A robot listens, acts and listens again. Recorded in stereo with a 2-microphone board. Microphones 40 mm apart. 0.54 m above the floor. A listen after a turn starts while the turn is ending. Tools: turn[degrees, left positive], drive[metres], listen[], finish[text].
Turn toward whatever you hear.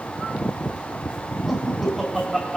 Action: turn[-30]
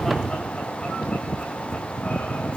Action: listen[]
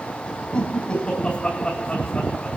Thought: So it is at 25° left.
Action: turn[25]
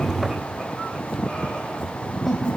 Action: finish[Found it: laughter, straight ahead, over 4 m away.]